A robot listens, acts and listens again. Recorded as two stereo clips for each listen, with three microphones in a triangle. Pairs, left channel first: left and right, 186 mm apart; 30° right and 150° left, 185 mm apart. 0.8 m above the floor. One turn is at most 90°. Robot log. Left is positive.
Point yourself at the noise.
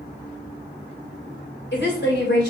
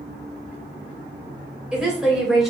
note: The woman speaking: 60° left.
cmd yaw +60
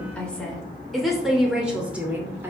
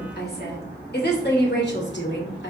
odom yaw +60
note: The woman speaking is now 10° right.
cmd yaw -10
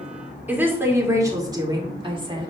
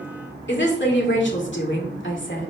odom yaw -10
note: The woman speaking is now 25° right.
cmd yaw -25
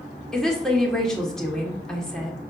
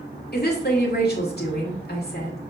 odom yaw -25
end: Found it: a woman speaking, straight ahead, 2 to 4 m away.